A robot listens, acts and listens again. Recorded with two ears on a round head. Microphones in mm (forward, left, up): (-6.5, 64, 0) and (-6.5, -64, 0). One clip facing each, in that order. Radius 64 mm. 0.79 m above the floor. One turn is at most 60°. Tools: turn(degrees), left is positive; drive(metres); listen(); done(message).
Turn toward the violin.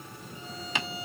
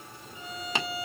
turn(degrees=-60)
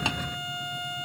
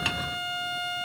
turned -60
turn(degrees=-35)
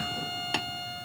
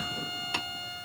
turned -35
done("Found it: a violin, straight ahead, 2 to 4 m away.")